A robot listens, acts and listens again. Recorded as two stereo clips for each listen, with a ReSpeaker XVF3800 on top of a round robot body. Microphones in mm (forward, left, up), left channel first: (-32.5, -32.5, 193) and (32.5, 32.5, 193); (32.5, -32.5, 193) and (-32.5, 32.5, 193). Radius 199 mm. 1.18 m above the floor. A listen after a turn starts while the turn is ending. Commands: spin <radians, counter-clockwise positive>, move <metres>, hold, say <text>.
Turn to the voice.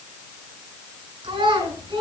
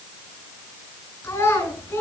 spin 0.26
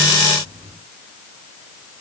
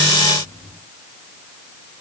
hold
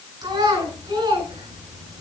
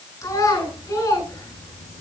say Found it: a child speaking, straight ahead, over 4 m away.